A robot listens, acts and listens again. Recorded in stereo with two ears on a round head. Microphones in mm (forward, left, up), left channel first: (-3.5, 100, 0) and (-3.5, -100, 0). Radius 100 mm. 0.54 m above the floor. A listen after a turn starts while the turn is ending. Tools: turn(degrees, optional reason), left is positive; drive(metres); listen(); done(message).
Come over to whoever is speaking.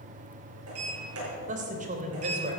turn(degrees=-35, reason="The woman speaking: about 35° right or 145° right.")
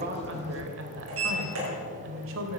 turn(degrees=-105, reason="So it is at 105° right.")
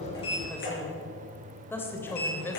turn(degrees=10, reason="The woman speaking is now 10° left.")
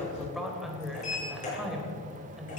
drive(metres=1.0)
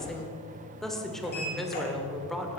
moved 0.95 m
drive(metres=1.0)
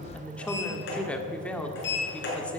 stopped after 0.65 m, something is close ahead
turn(degrees=10, reason="The woman speaking is now 10° left.")
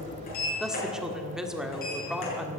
done("Arrived at the woman speaking, straight ahead.")